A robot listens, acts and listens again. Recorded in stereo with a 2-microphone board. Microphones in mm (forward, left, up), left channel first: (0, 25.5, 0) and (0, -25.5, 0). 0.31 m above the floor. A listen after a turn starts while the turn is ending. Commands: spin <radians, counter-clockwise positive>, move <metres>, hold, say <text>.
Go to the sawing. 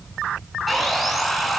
spin 0.52
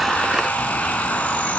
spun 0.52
spin 2.62
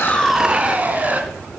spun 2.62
spin -0.61
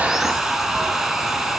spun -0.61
move 1.0
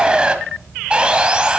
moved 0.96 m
spin -0.35
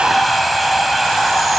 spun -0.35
move 1.0
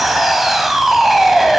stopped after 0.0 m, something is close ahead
say I am next to the sawing.